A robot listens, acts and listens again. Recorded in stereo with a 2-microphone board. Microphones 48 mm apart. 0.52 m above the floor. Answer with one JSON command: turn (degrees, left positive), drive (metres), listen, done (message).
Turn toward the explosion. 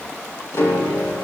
{"listen": true}
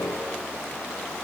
{"listen": true}
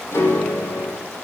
{"done": "I can't make out an explosion to turn to."}